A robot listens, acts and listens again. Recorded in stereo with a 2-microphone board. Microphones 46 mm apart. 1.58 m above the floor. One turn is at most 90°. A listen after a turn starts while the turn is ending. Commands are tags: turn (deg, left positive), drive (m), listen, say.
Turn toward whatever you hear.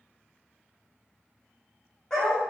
<turn deg="30"/>
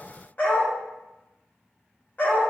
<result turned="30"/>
<turn deg="90"/>
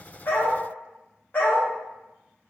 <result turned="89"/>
<turn deg="50"/>
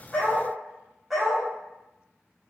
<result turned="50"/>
<say>Found it: a dog barking, straight ahead, 1 to 2 m away.</say>